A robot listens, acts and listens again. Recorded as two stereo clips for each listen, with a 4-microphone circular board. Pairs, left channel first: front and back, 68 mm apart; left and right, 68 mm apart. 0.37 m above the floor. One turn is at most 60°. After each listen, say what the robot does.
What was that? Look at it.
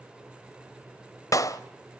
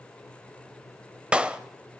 Turn 20° right.
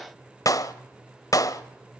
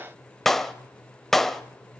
Found it: a clap, straight ahead, 1 to 2 m away.